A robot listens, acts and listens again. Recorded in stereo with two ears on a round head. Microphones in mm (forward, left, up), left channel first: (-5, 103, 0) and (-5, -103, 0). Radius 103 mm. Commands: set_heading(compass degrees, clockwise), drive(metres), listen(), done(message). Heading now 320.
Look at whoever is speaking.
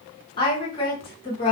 set_heading(295)
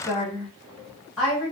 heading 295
done("Found it: a woman speaking, straight ahead, 1 to 2 m away.")